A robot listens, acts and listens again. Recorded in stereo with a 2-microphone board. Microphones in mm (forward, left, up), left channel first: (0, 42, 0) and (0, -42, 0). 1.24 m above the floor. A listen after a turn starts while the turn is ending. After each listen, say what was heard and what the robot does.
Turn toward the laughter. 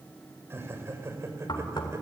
The laughter: about 35° right or 145° right. Turn 35° right.
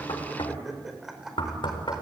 Found it: laughter, straight ahead.